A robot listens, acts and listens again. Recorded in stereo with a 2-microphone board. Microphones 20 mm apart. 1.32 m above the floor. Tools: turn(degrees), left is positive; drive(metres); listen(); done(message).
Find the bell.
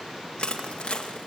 listen()
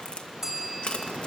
turn(degrees=-20)
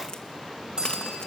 turn(degrees=-140)
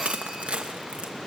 listen()
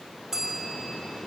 turn(degrees=-20)
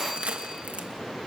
listen()
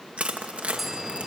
turn(degrees=-10)
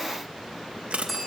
done("Found it: a bell, straight ahead, over 4 m away.")